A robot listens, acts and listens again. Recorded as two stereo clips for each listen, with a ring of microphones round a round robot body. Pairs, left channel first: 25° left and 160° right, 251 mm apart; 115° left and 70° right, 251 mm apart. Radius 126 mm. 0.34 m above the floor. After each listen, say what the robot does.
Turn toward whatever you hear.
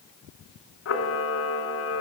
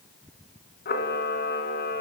Turn 60° left.
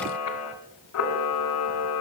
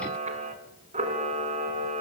Found it: a camera shutter, straight ahead.